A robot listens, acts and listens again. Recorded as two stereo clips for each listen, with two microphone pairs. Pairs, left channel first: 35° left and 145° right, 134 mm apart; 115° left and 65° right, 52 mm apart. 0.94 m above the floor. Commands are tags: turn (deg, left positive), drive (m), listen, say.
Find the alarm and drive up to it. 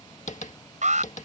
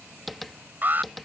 <turn deg="-120"/>
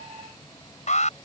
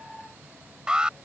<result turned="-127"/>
<turn deg="10"/>
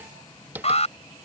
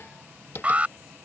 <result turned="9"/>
<drive m="1.0"/>
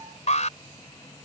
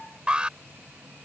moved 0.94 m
<drive m="1.0"/>
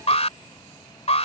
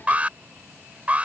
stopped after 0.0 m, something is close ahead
<say>Something is in my way. I am facing the alarm but have not reached it.</say>